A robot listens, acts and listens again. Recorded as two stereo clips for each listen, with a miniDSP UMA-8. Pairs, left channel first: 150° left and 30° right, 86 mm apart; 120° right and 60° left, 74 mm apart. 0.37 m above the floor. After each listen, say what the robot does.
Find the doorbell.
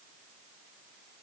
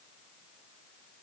Keep listening.
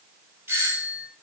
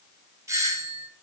Turn 25° left.
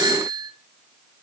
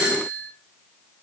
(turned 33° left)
Turn 10° right.
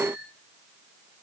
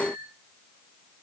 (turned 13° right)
Keep listening.
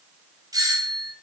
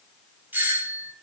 Found it: a doorbell, straight ahead, 2 to 4 m away.